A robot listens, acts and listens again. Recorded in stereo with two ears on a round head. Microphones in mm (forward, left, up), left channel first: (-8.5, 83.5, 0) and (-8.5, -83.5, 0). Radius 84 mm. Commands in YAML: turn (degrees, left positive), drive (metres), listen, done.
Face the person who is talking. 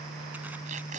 listen: true
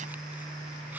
listen: true
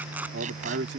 turn: -60
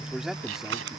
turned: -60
done: "Found it: a man speaking, straight ahead."